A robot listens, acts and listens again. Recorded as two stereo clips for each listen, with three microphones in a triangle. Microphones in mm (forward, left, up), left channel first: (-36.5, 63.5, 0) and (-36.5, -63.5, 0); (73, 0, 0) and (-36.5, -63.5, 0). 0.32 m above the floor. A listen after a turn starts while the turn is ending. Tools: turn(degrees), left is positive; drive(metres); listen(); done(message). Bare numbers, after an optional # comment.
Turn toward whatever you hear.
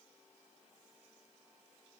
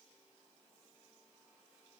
listen()
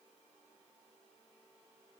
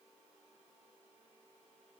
listen()
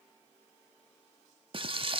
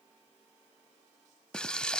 # The frying: 55° right.
turn(-55)
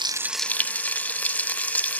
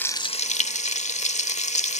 # The frying is now 15° left.
turn(15)
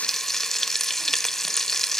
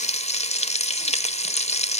done("Found it: frying, straight ahead.")